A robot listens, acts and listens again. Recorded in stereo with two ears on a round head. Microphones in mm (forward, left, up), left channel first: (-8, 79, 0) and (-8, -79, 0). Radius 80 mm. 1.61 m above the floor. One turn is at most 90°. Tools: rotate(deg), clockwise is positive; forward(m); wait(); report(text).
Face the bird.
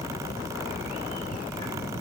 wait()
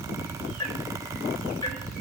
wait()
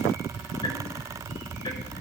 report("I can't make out a bird, only ticking.")